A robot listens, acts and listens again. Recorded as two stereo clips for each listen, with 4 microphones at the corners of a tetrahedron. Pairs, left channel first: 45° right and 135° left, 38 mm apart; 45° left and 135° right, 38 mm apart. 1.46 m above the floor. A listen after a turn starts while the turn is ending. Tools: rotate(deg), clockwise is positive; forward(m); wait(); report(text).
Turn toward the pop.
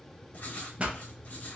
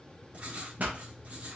rotate(175)
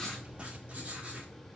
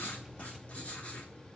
report("Facing where the pop came from. I can't hear it now.")